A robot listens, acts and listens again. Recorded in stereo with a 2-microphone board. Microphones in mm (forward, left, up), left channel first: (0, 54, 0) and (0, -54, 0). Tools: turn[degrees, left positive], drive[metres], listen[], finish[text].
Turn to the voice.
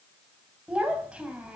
Action: turn[-30]
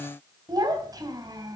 Thought: So it is at 140° right.
Action: turn[-140]
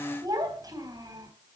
Thought: The child speaking is now 35° right.
Action: turn[-35]
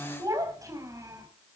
Thought: The child speaking is now 30° right.
Action: turn[-30]
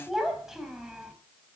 Action: finish[Facing the child speaking, 2 to 4 m away.]